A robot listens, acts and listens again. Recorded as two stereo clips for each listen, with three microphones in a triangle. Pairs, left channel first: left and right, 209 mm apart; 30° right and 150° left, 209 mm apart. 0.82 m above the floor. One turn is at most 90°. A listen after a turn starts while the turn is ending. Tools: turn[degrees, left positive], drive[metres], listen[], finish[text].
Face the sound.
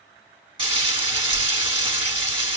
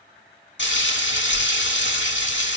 Thought: The frying: 30° right.
Action: turn[-30]
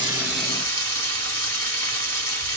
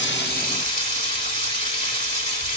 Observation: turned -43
Thought: The frying is now 15° left.
Action: turn[15]
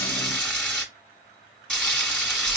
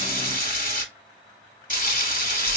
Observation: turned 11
Action: finish[Facing the frying.]